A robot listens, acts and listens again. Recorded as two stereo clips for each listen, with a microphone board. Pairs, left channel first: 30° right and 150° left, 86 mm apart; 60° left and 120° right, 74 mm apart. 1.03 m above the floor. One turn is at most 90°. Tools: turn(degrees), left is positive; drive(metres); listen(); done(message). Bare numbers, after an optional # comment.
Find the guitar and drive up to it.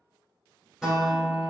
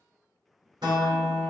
# The guitar: 125° right.
turn(-90)
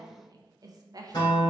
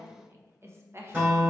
# The guitar is now 60° right.
turn(-60)
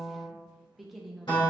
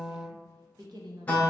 # The guitar is now 10° right.
turn(-10)
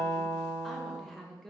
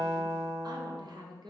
drive(1.0)
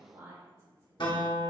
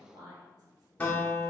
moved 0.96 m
# The guitar is now 10° right.
turn(-10)
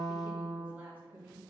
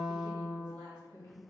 drive(1.0)
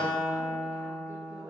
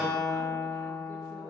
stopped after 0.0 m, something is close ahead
done("Arrived at the guitar, straight ahead.")